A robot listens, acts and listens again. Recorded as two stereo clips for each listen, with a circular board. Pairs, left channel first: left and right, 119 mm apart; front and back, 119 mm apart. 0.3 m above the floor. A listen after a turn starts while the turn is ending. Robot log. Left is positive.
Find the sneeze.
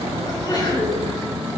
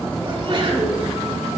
note: The sneeze: 140° left.
cmd yaw +140
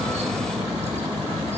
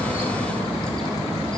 end: I heard a sneeze from this way, but can't make it out now.